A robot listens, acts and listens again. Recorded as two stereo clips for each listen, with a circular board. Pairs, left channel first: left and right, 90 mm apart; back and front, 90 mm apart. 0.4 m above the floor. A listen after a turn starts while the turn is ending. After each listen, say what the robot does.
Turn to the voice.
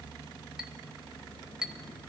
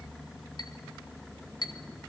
Keep listening.
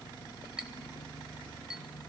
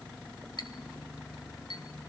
Keep listening.
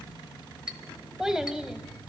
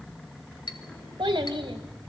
Turn 10° right.
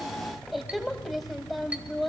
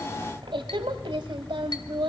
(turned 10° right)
Found it: a child speaking, straight ahead, 1 to 2 m away.